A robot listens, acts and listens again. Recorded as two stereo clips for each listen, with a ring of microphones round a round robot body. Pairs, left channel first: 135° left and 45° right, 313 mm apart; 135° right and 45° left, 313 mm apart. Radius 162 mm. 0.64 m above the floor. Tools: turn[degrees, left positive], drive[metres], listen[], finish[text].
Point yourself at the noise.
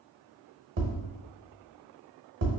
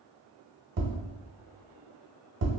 Thought: The tapping: 10° right.
Action: turn[-10]
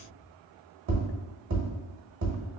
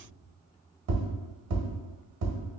Action: finish[Found it: tapping, straight ahead, 1 to 2 m away.]